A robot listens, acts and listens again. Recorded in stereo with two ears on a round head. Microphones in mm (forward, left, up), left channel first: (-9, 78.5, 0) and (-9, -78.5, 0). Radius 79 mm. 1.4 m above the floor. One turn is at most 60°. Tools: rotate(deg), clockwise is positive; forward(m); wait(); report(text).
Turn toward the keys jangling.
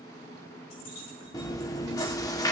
rotate(-60)
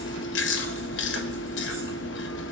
wait()
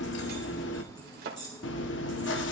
rotate(-25)
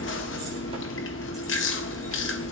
wait()
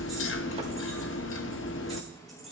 report("Facing the keys jangling, over 4 m away.")